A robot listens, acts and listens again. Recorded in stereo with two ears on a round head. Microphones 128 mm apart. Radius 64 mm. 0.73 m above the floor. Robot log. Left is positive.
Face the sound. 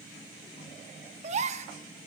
note: The gasp: about 50° right or 130° right.
cmd yaw -50
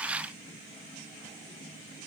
cmd idle
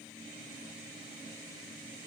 end: I heard a gasp, but can't make it out now. It was about straight ahead or 80° right.